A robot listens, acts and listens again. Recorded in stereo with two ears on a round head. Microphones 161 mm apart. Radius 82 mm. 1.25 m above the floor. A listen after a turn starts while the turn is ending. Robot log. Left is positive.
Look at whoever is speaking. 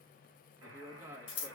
cmd yaw -30
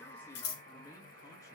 cmd idle
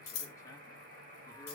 cmd idle
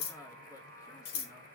note: So it is at 15° left.
cmd yaw +15
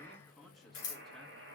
end: Found it: a man speaking, straight ahead, 1 to 2 m away.